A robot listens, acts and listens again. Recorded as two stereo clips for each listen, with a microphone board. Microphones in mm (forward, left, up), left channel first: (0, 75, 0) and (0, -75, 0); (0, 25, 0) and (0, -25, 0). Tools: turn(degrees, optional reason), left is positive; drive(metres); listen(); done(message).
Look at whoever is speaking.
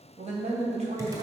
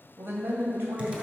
turn(degrees=-55, reason="The man speaking: about 55° right or 125° right.")
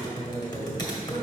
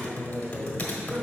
listen()
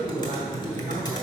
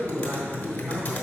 turn(degrees=-65, reason="So it is at 65° right.")
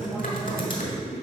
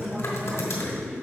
done("Found it: a man speaking, straight ahead.")